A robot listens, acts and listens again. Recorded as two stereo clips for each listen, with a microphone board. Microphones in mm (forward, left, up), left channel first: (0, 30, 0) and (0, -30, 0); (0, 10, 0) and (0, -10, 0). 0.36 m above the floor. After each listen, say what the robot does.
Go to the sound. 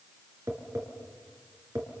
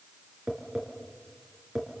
Turn 45° right.
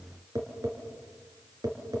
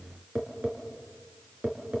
Turn 90° right.
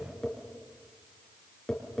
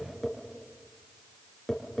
Turn 10° left.
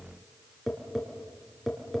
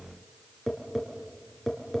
Drive 1.0 m forward.
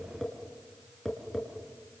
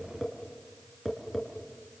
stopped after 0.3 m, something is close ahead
Something is in my way. I am facing the tapping but have not reached it.